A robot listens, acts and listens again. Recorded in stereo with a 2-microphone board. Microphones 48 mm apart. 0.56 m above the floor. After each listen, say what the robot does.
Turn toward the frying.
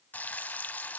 Turn 35° left.
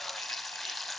Facing the frying.